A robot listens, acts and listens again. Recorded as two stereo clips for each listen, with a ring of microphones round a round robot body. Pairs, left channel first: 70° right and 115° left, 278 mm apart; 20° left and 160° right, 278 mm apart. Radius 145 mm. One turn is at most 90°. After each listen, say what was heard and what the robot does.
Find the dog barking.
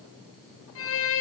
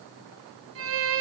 Keep listening.
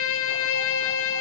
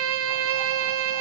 Keep listening.
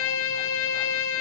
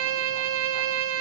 I can't make out a dog barking to turn to.